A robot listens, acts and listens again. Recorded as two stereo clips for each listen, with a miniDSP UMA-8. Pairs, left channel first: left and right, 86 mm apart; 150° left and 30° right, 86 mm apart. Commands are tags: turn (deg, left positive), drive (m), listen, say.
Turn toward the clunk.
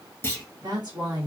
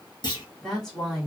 <turn deg="150"/>
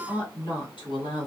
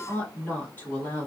<say>Facing where the clunk came from. I can't hear it now.</say>